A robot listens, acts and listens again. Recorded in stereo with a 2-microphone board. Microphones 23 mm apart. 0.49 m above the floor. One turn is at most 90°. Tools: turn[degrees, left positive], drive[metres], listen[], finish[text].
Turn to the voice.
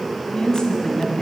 Thought: The woman speaking: about 40° left or 140° left.
Action: turn[40]
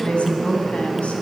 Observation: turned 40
Thought: So it is at 100° left.
Action: turn[90]
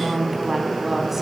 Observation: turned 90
Thought: The woman speaking is now 10° right.
Action: turn[-10]
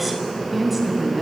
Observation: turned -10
Action: finish[Found it: a woman speaking, straight ahead.]